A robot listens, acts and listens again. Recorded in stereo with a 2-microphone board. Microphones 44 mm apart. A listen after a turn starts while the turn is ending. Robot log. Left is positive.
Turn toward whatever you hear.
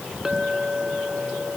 cmd yaw -30
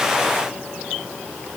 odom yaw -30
cmd idle
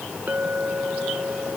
note: So it is at 135° right.
cmd yaw -135
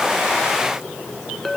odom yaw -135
end: Facing the clink.